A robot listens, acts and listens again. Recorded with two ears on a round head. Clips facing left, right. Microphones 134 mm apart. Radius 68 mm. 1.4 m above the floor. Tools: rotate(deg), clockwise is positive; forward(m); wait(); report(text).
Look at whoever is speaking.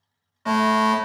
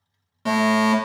wait()
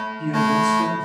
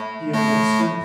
rotate(-40)
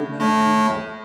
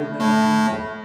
rotate(-100)
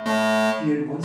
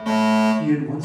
report("Facing the man speaking, 1 to 2 m away.")